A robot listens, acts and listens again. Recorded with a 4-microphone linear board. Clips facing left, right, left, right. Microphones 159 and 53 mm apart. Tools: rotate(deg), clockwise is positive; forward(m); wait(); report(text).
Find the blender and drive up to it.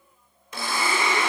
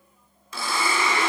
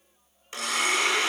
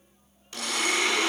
rotate(-20)
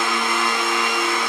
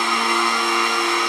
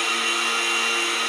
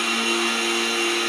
forward(1.0)
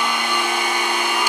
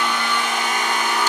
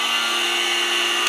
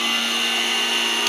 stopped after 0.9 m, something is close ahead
rotate(-15)
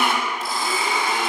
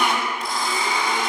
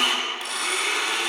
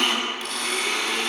report("Arrived at the blender, straight ahead.")